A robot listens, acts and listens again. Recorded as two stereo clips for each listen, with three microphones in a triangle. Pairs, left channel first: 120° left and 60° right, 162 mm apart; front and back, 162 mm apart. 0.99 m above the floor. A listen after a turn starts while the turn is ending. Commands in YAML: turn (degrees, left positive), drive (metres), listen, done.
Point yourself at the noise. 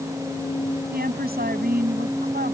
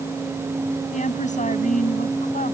turn: -40
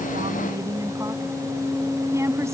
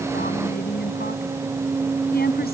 turn: 15
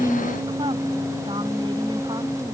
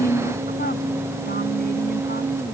listen: true
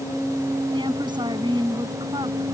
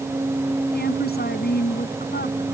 done: "Found it: a woman speaking, straight ahead."